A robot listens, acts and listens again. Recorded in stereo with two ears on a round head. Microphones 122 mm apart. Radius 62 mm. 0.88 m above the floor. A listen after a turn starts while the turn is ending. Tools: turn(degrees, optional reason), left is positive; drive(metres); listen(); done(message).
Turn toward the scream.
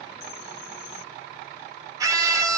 turn(degrees=-25, reason="The scream: about 25° right or 155° right.")
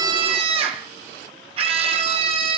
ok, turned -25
turn(degrees=-125, reason="So it is at 125° right.")
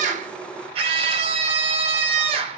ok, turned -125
turn(degrees=-50, reason="The scream is now 50° right.")
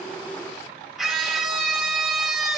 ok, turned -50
done("Facing the scream, 1 to 2 m away.")